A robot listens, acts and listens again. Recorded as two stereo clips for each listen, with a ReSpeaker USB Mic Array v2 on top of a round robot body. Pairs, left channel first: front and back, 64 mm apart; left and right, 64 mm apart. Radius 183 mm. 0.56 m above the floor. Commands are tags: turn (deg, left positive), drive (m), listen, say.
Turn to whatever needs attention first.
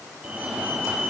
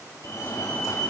<turn deg="110"/>
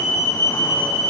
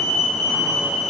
<say>Found it: a fire alarm, straight ahead.</say>